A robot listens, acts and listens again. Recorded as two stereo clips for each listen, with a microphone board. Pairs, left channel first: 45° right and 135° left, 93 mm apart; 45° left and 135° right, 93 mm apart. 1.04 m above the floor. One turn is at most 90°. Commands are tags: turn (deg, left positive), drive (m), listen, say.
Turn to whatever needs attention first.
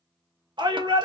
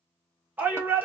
<turn deg="90"/>
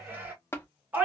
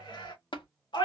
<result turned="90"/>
<turn deg="65"/>
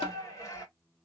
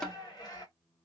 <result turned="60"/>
<turn deg="10"/>
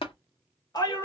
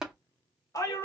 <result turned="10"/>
<say>Facing the shout, 1 to 2 m away.</say>